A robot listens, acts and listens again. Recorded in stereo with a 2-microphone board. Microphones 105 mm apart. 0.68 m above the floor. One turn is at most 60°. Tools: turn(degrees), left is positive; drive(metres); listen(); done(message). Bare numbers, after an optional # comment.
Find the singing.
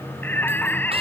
# The singing: about 15° left or 165° left.
turn(15)
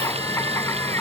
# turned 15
# The singing: about 25° left or 155° left.
turn(25)
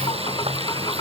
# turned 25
# So it is at 135° left.
turn(60)
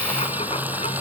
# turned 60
# Nothing new. It was at 75° left.
turn(60)
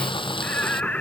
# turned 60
# The singing is now 15° left.
turn(15)
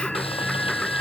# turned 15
done("Found it: singing, straight ahead.")